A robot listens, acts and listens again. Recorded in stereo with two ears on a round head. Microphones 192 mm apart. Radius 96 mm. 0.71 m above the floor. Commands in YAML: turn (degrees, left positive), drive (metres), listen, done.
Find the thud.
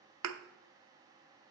turn: -90
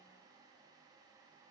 done: "I heard a thud from this way, but can't make it out now."